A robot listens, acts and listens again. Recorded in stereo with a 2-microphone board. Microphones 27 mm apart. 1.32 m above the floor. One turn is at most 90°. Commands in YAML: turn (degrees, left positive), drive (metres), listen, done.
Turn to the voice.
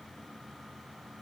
listen: true
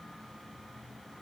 listen: true
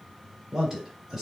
turn: -30
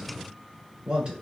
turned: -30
turn: -90
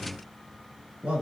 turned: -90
turn: -65
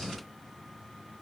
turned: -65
listen: true
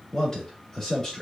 turn: 20
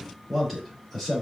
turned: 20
done: "Found it: a man speaking, straight ahead, 1 to 2 m away."